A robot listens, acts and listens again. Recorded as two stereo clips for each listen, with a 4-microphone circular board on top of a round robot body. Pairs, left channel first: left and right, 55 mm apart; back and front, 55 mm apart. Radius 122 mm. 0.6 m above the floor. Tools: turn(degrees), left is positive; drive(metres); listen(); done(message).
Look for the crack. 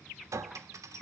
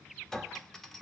listen()
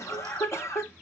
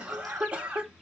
listen()
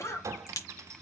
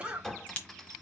turn(degrees=110)
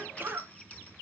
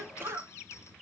done("I heard a crack from this way, but can't make it out now.")